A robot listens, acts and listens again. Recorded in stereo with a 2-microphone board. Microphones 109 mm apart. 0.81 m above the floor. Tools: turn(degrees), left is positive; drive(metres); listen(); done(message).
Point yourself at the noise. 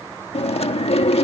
turn(degrees=65)
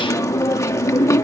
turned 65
turn(degrees=30)
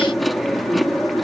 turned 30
done("Facing the chewing.")